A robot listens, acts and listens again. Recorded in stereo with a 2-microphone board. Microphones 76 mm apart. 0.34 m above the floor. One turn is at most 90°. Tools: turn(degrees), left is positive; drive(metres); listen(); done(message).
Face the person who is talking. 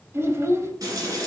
turn(degrees=-35)
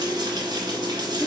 turn(degrees=-10)
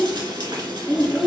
done("Facing the child speaking.")